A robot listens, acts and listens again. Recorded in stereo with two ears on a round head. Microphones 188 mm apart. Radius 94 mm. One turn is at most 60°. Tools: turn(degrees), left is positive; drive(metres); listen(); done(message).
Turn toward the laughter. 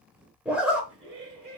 turn(degrees=-35)
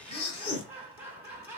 turn(degrees=-10)
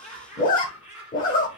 done("Facing the laughter.")